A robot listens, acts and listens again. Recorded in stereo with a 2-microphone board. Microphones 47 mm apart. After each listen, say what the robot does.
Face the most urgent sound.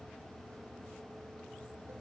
Keep listening.
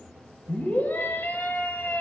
Turn 45° left.
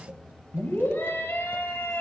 Turn 75° left.
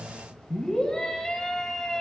Turn 15° left.
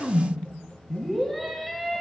Facing the scream, 2 to 4 m away.